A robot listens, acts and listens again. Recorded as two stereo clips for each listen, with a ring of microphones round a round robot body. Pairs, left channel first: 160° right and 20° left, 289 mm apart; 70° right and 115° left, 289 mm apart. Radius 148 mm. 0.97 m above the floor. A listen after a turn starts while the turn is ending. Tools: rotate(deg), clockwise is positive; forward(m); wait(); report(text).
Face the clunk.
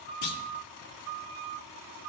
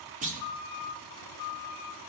rotate(-180)
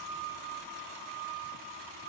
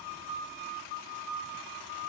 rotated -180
report("Facing where the clunk came from. I can't hear it now.")